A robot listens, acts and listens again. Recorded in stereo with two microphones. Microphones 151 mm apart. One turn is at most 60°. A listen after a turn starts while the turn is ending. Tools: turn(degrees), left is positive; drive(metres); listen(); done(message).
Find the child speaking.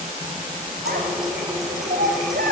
turn(degrees=-60)
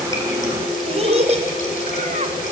turn(degrees=-50)
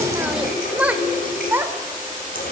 turn(degrees=-15)
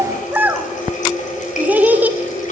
turn(degrees=-10)
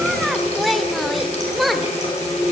done("Found it: a child speaking, straight ahead.")